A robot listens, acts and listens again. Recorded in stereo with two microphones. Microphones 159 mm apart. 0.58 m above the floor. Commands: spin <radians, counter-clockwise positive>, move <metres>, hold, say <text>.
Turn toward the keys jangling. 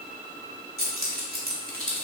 spin -1.13
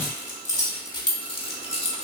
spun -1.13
spin 0.70
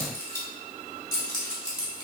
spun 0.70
spin 0.52
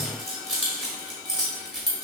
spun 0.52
say Found it: keys jangling, straight ahead, 1 to 2 m away.